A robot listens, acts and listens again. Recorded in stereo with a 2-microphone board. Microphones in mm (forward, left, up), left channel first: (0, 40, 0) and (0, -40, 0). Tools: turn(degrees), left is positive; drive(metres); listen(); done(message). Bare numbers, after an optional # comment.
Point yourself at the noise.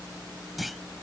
turn(30)
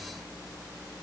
listen()
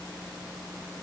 done("I heard a clunk, but can't make it out now. It was about 30° right or 150° left.")